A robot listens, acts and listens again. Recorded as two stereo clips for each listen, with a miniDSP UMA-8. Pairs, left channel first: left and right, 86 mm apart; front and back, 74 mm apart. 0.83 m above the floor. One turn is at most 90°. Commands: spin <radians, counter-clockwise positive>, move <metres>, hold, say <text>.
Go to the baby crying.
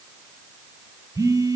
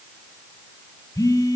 hold
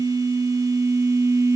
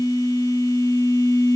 hold
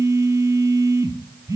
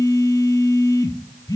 say I can't make out a baby crying to turn to.